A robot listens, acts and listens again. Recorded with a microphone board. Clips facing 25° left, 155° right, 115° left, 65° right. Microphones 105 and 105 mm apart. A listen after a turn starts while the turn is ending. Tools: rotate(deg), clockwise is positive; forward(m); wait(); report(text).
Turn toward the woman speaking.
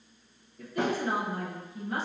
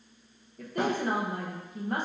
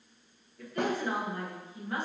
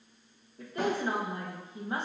rotate(130)
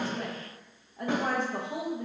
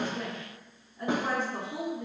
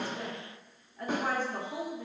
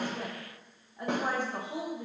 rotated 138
rotate(-10)
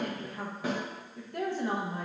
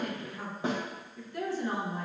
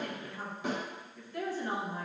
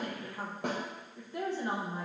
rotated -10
report("Found it: a woman speaking, straight ahead.")